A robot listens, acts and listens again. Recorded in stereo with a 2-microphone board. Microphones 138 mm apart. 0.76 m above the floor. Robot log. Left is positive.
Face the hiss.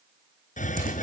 note: The hiss: about 65° left or 115° left.
cmd yaw +65
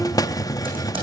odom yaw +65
note: So it is at 30° left.
cmd yaw +30
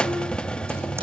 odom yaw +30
end: Found it: a hiss, straight ahead, under 1 m away.